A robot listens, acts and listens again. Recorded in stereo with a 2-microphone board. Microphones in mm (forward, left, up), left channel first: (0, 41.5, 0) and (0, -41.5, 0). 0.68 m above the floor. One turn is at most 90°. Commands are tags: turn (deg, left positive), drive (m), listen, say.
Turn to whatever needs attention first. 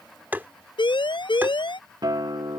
<turn deg="75"/>
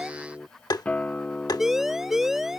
<say>Facing the siren.</say>